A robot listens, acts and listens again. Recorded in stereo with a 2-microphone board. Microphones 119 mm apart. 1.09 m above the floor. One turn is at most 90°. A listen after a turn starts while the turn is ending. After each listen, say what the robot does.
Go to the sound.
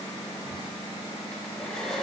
Turn 30° left.
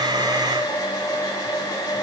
Turn 90° left.
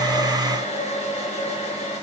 Turn 70° left.
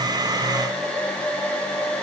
Turn 10° left.
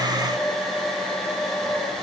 Drive 1.0 m forward.
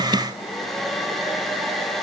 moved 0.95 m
Drive 1.0 m forward.
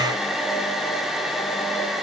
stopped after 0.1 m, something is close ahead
I am next to the hair dryer.